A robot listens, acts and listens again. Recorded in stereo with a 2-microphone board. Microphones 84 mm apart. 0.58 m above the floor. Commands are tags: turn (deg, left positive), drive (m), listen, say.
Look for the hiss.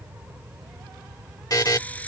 <turn deg="15"/>
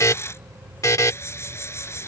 <turn deg="150"/>
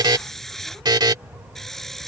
<say>Found it: a hiss, straight ahead.</say>